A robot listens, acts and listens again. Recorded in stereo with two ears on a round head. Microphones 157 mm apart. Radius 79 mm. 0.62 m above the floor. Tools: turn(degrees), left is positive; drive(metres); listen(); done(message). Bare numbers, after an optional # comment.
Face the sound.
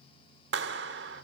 # The clap: about 70° right or 110° right.
turn(-70)
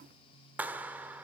# So it is at 10° right.
turn(-10)
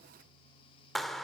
done("Facing the clap, 1 to 2 m away.")